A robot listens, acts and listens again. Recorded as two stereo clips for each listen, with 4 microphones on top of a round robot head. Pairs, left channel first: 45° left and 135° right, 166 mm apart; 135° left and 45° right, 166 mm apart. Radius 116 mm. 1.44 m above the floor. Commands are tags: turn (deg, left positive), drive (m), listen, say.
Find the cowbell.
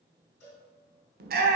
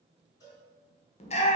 <turn deg="70"/>
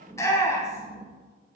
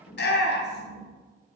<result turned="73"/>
<listen/>
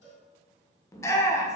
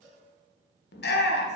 <say>Facing the cowbell.</say>